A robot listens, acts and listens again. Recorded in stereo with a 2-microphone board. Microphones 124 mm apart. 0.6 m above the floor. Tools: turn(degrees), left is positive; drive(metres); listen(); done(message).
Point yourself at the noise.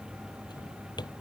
turn(degrees=35)
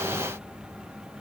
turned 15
listen()
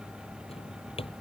turn(degrees=130)
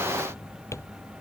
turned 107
turn(degrees=25)
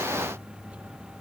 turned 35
turn(degrees=-10)
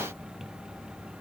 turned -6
listen()
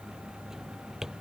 done("Facing the drawer.")